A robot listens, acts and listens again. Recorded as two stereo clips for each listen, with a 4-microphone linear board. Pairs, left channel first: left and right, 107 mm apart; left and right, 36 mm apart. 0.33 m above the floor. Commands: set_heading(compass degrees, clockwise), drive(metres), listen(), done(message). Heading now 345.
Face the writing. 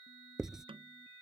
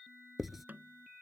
set_heading(15)
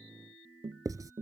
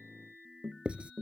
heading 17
set_heading(162)
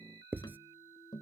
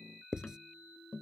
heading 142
set_heading(162)
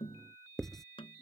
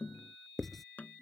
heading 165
done("Facing the writing.")